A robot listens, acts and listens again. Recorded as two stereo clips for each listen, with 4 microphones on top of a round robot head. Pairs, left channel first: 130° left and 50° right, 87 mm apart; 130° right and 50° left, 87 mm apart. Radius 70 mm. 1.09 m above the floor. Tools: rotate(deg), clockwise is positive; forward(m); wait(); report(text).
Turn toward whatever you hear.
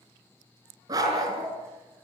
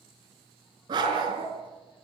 report("Facing the dog barking.")